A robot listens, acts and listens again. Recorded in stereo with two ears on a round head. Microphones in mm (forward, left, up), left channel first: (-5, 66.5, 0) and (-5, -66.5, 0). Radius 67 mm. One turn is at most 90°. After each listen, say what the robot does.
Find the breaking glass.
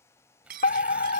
Turn 65° right.
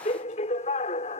Keep listening.
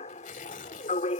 I heard breaking glass, but can't make it out now. It was about straight ahead or 50° right.